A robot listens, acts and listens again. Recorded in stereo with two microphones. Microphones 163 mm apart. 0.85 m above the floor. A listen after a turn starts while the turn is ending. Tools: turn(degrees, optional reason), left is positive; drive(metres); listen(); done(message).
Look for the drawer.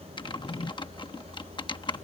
turn(degrees=45, reason="The drawer: about 45° left or 135° left.")
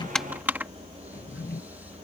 turn(degrees=90, reason="So it is at 90° left.")
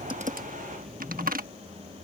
done("Found it: a drawer, straight ahead.")